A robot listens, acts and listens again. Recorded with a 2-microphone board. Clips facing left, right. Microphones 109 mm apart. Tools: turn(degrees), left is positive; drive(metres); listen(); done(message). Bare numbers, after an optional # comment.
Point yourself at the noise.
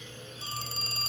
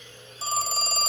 # The phone ringing: about 70° right or 110° right.
turn(-70)
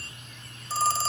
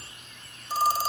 # So it is at 15° right.
turn(-15)
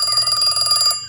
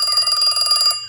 done("Facing the phone ringing.")